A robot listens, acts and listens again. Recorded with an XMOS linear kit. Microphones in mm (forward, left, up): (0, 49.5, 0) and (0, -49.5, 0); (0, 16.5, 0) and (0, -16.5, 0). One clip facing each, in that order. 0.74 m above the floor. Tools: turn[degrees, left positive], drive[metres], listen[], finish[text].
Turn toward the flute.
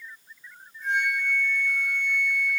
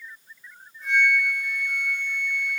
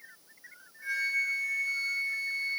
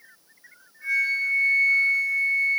Thought: The flute: about 60° right or 120° right.
Action: turn[-60]
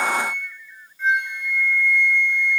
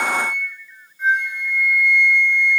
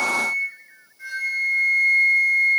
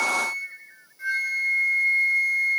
Thought: So it is at 15° right.
Action: turn[-15]
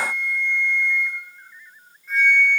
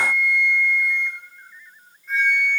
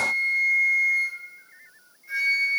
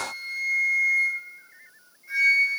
Action: finish[Facing the flute.]